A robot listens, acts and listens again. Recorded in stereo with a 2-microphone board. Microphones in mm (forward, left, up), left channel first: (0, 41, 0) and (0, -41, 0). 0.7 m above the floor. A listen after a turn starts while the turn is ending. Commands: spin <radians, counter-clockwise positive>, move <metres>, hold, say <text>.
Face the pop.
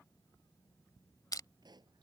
spin -1.05
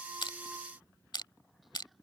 hold
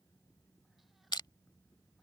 say I heard a pop, but can't make it out now. It was about straight ahead or 60° right.